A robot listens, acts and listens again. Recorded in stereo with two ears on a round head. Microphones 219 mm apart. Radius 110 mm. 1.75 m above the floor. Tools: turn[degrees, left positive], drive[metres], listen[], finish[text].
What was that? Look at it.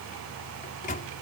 Thought: The microwave: about 35° left or 145° left.
Action: turn[35]
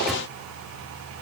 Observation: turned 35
Action: listen[]
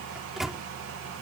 Action: finish[Found it: a microwave, straight ahead.]